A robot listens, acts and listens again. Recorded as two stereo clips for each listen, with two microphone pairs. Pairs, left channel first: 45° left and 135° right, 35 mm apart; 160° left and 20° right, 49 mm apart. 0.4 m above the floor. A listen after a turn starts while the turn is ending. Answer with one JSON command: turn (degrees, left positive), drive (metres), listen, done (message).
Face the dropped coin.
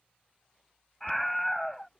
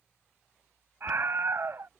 {"turn": 90}
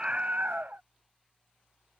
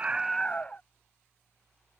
{"done": "Facing where the dropped coin came from. I can't hear it now."}